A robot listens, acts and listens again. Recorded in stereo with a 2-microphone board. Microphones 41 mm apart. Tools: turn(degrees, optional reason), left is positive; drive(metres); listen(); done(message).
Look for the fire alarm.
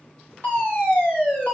turn(degrees=60, reason="The fire alarm: about 60° left or 120° left.")
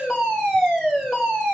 turn(degrees=10, reason="So it is at 10° left.")
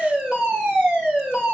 done("Facing the fire alarm, 2 to 4 m away.")